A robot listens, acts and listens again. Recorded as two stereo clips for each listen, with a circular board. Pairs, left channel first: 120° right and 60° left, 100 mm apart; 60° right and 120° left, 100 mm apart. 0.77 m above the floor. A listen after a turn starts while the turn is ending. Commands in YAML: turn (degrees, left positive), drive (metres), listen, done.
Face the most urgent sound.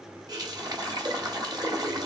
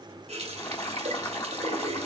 listen: true
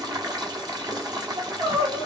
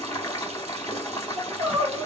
turn: 60
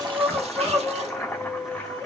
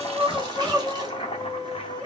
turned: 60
turn: 15
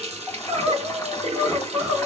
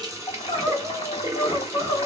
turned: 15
done: "Found it: crying, straight ahead, 2 to 4 m away."